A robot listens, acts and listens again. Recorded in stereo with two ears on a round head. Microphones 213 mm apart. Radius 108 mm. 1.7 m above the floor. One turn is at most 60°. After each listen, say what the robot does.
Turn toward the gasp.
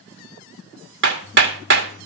Keep listening.
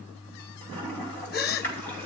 Turn 40° left.
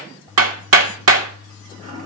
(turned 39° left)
Keep listening.
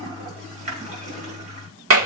I heard a gasp, but can't make it out now. It was about 5° left or 100° left.